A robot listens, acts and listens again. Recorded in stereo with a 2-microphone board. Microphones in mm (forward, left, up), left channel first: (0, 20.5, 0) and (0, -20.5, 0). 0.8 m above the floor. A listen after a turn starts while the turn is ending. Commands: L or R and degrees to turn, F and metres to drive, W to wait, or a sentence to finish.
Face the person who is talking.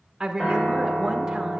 R30
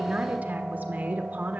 R140
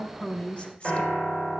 L30
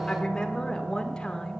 L15
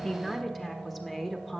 Facing the woman speaking.